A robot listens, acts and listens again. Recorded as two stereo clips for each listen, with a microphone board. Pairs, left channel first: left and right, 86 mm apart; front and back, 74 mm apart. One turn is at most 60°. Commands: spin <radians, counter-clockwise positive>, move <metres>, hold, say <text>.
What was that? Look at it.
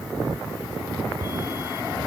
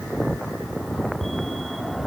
hold
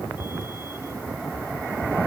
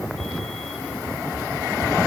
hold
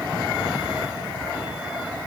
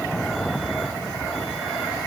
say I can't make out anything.